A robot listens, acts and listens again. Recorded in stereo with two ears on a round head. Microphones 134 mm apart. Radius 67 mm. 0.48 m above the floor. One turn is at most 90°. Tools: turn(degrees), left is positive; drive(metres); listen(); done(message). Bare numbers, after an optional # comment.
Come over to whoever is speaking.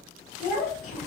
# The child speaking: about 55° left or 125° left.
turn(55)
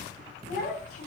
# So it is at 65° left.
turn(65)
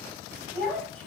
# The child speaking is now 10° left.
turn(10)
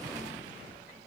listen()
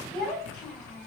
drive(1.0)
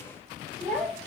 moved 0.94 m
# The child speaking is now 10° left.
turn(10)
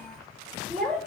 drive(1.0)
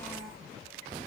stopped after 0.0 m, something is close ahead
done("I am next to the child speaking.")